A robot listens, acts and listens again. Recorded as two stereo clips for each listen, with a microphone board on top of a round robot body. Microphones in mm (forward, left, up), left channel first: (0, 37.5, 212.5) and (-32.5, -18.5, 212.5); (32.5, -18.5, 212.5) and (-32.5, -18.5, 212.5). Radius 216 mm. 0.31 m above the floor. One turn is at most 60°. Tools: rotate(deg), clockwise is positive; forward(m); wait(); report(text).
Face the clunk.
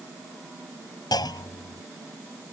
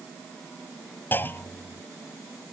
rotate(-60)
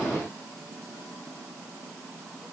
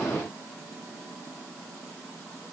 report("Facing where the clunk came from. I can't hear it now.")